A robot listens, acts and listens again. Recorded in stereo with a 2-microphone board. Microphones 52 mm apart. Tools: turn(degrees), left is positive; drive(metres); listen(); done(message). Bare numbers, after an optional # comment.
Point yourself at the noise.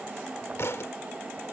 # The thud: about 60° left or 120° left.
turn(60)
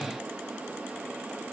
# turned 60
listen()
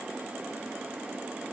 done("I heard a thud, but can't make it out now. It was about straight ahead or 60° left.")